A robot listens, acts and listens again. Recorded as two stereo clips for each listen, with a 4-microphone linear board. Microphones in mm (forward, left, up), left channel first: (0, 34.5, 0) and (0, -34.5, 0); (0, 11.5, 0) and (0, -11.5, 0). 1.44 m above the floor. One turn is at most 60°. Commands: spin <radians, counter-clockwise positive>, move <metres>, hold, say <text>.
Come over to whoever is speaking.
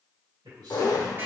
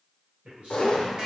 spin -1.05
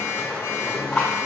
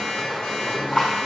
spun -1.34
hold
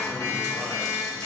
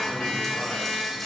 hold
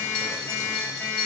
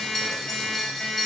say I heard a man speaking, but can't make it out now. It was about 5° left or 30° right. I did not reach it.